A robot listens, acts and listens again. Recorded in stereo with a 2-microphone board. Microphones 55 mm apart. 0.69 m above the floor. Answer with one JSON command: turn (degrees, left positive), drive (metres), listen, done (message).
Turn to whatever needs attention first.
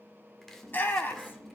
{"turn": 35}
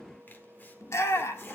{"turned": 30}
{"turn": 110}
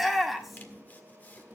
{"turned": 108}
{"done": "Facing the shout, 1 to 2 m away."}